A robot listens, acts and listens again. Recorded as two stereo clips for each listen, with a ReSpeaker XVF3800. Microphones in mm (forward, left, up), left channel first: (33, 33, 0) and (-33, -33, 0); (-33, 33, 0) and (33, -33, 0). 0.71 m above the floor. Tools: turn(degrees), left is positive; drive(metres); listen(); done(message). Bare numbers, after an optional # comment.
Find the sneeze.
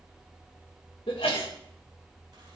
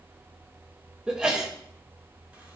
# The sneeze: 35° left.
turn(35)
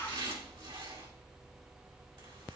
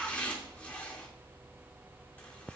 done("Facing where the sneeze came from. I can't hear it now.")